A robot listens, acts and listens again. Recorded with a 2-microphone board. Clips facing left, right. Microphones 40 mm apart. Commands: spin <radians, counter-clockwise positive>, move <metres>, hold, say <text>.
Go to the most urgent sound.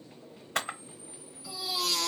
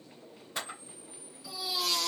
spin 0.52
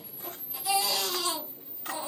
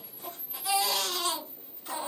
spin -0.44
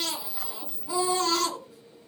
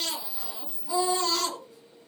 spin 0.35
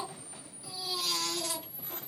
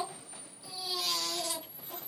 move 1.0
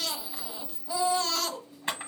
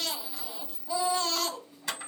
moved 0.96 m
move 1.0
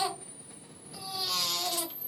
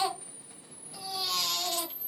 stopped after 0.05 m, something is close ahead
say Arrived at the baby crying, straight ahead.